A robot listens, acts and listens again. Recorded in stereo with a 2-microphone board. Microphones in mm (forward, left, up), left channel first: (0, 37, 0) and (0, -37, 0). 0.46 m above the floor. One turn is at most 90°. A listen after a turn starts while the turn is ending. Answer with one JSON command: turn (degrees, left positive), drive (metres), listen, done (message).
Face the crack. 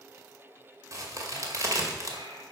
{"turn": -45}
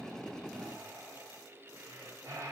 {"listen": true}
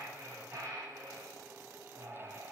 {"done": "I heard a crack, but can't make it out now. It was about straight ahead or 90° right."}